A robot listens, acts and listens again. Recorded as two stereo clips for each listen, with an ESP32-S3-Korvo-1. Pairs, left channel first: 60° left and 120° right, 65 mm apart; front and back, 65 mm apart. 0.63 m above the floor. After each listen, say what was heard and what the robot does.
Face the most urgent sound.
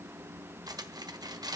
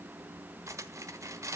Keep listening.
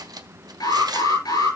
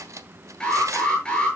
The alarm: 75° left. Turn 75° left.
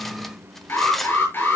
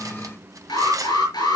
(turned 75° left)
Facing the alarm, over 4 m away.